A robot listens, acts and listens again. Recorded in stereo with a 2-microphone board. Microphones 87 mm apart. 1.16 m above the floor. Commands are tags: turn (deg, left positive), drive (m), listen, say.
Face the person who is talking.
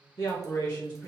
<turn deg="45"/>
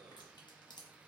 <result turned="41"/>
<listen/>
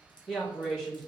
<turn deg="10"/>
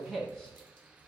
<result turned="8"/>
<say>Facing the man speaking, 1 to 2 m away.</say>